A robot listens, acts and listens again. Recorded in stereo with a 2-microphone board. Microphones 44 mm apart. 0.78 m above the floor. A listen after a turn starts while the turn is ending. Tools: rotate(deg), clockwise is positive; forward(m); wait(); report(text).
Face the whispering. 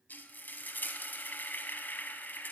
wait()
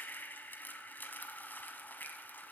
wait()
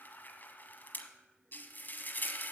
report("I can't make out whispering to turn to.")